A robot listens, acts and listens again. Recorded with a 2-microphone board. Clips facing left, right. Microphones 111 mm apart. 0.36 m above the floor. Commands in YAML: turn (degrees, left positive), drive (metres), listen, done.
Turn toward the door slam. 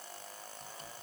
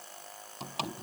turn: -90
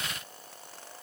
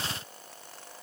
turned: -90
done: "Facing where the door slam came from. I can't hear it now."